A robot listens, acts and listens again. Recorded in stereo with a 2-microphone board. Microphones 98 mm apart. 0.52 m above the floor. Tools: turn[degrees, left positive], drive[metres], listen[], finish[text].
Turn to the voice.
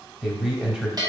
Action: turn[-30]
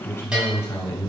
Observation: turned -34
Thought: So it is at 25° left.
Action: turn[25]
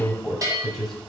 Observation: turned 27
Action: finish[Found it: a man speaking, straight ahead, 2 to 4 m away.]